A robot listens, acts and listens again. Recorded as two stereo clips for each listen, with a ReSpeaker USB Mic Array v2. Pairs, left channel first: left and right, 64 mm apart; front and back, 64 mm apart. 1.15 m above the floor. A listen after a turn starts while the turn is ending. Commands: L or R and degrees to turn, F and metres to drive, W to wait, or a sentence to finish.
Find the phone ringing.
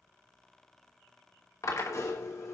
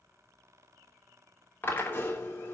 W
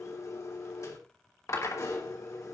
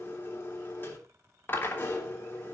W
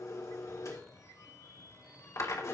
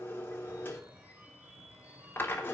L115
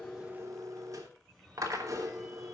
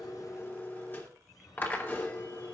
Facing the phone ringing, over 4 m away.